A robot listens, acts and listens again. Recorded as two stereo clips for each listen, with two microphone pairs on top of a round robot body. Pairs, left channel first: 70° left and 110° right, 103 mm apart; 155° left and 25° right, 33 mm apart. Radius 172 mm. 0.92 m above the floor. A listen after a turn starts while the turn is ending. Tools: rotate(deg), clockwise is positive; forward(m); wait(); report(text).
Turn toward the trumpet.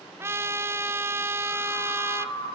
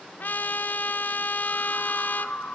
rotate(175)
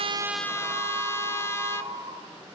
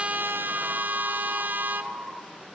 report("Found it: a trumpet, straight ahead, 1 to 2 m away.")